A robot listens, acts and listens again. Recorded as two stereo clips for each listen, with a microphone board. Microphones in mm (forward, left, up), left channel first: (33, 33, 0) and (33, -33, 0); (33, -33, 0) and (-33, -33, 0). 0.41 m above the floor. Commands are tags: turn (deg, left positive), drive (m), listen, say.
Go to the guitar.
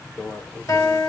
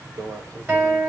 <turn deg="125"/>
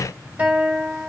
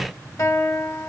<turn deg="-25"/>
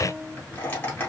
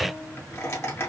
<drive m="1.0"/>
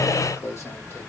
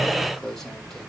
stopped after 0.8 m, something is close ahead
<listen/>
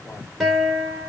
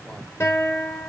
<say>I am next to the guitar.</say>